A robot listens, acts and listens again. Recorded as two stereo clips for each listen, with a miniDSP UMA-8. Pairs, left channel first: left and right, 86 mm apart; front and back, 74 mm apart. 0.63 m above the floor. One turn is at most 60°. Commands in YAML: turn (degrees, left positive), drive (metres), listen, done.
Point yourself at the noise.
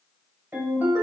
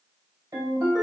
turn: -60
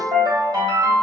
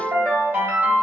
turn: -60
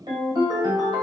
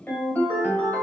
turn: -60
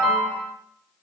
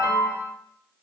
done: "Facing the ringtone, 1 to 2 m away."